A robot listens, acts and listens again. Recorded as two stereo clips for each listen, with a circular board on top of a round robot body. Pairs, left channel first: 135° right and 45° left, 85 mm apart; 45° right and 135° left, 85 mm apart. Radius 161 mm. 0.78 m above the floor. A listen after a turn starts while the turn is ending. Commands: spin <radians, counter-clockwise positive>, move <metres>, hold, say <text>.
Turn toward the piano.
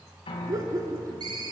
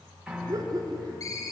spin -2.53
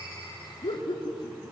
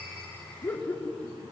hold
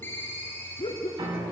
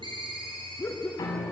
say Found it: a piano, straight ahead.